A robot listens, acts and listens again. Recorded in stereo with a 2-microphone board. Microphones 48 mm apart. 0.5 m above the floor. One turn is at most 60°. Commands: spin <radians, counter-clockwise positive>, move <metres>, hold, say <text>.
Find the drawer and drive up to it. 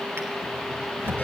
spin -0.96
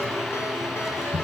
move 1.0
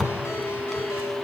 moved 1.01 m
move 1.0
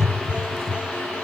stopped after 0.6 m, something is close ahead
spin 0.17
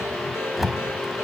say Arrived at the drawer, straight ahead.